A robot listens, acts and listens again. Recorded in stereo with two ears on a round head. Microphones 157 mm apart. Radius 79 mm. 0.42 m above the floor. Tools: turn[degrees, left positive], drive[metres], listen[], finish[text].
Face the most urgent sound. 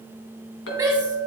Thought: The shout: about 20° right or 160° right.
Action: turn[-20]
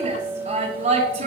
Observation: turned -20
Thought: So it is at 135° right.
Action: turn[-135]
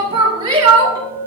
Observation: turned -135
Thought: The shout is now 30° right.
Action: turn[-30]
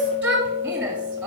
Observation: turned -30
Thought: The shout is now 10° right.
Action: turn[-10]
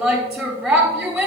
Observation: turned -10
Action: finish[Facing the shout, 1 to 2 m away.]